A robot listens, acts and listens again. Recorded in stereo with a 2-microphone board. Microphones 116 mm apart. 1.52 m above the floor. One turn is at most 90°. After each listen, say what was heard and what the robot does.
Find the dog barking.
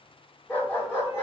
The dog barking: about 20° left or 160° left. Turn 20° left.
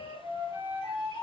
Keep listening.
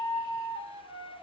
Keep listening.
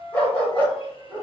Turn 30° left.
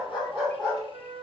So it is at 10° right. Turn 10° right.
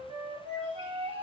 Keep listening.
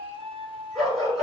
Facing the dog barking, over 4 m away.